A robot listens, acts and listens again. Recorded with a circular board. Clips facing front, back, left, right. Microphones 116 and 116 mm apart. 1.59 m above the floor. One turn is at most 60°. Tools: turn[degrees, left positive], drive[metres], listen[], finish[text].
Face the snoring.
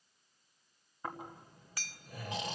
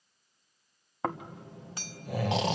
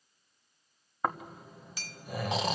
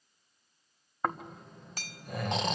Thought: The snoring: 175° left.
Action: turn[60]
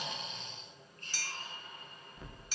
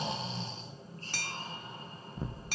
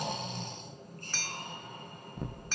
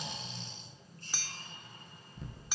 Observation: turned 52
Thought: The snoring is now 125° left.
Action: turn[60]
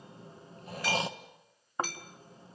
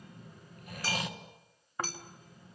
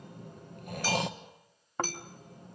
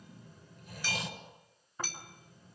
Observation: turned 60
Thought: The snoring is now 60° left.
Action: turn[60]
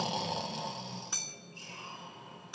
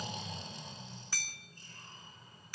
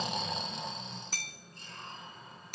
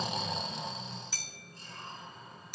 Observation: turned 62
Action: finish[Found it: snoring, straight ahead.]